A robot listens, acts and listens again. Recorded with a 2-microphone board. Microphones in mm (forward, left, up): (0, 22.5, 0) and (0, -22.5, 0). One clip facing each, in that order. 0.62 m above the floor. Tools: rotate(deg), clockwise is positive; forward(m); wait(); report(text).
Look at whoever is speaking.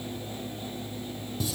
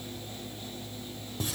wait()
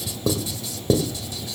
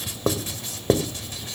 wait()
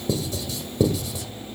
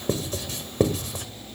report("I can't make out anyone speaking to turn to.")